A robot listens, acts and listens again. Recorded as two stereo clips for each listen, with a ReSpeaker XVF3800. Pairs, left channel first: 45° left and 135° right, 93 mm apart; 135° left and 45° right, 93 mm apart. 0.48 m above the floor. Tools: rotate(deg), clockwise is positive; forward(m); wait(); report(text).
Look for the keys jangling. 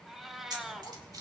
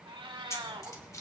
rotate(170)
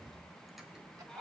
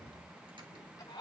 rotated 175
wait()
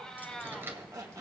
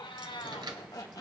wait()
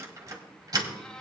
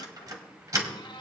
rotate(90)
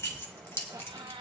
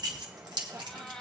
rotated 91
rotate(15)
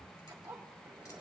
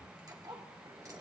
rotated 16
wait()
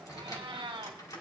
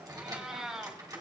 wait()
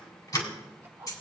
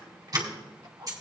report("Facing the keys jangling.")